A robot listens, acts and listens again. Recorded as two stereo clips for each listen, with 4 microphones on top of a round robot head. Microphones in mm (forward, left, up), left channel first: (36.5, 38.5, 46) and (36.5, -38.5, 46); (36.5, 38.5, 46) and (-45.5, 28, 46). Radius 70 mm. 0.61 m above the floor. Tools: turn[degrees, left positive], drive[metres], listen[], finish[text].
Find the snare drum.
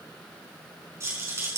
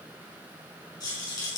Action: listen[]
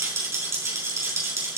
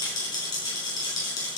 Action: listen[]
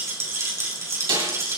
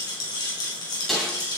Thought: The snare drum: 80° right.
Action: turn[-80]
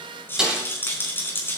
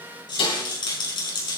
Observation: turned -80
Thought: The snare drum is now 10° right.
Action: turn[-10]
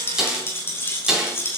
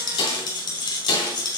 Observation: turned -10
Thought: The snare drum is now 10° right.
Action: turn[-10]
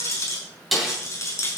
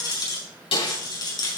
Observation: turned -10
Action: finish[Facing the snare drum, over 4 m away.]